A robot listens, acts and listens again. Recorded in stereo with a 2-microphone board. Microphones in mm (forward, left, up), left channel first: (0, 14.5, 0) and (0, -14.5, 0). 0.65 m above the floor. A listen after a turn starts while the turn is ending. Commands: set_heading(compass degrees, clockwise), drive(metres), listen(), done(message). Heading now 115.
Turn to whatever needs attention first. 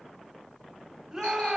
set_heading(145)
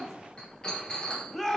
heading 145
set_heading(135)
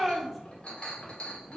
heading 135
done("Facing the shout.")